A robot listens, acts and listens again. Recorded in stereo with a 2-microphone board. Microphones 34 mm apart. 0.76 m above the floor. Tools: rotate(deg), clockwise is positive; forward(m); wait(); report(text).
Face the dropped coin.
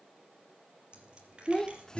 rotate(25)
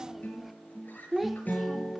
wait()
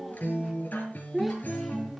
report("I heard a dropped coin, but can't make it out now. It was about straight ahead or 130° right.")